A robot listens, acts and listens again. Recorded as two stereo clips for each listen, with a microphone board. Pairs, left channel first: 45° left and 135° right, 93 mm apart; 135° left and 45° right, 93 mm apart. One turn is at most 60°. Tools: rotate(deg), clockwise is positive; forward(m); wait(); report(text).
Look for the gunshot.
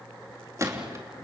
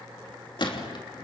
rotate(-60)
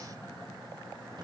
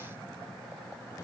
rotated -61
rotate(-60)
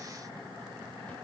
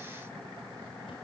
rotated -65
rotate(-45)
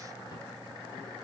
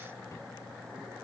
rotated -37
report("Facing where the gunshot came from. I can't hear it now.")